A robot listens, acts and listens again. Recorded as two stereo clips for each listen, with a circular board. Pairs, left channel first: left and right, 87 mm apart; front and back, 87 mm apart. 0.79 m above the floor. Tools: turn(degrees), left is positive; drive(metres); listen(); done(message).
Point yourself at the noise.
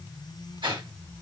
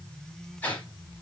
turn(degrees=-65)
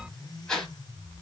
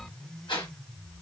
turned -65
done("Facing the whoosh, 1 to 2 m away.")